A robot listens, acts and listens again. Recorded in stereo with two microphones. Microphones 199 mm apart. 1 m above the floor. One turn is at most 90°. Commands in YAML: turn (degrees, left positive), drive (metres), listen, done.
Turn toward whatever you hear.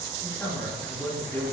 turn: 30
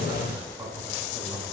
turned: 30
turn: -15
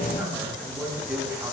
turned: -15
done: "Found it: a man speaking, straight ahead."